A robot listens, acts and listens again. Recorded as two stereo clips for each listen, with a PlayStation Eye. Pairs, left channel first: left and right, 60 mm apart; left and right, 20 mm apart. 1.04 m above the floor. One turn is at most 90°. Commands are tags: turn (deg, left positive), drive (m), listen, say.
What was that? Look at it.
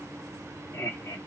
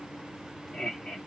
<turn deg="65"/>
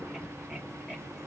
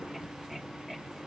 <listen/>
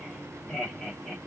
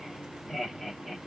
<turn deg="15"/>
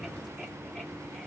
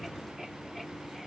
<listen/>
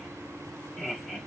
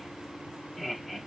<turn deg="10"/>
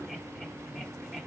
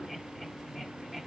<listen/>
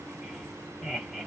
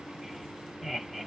<say>Found it: laughter, straight ahead, 2 to 4 m away.</say>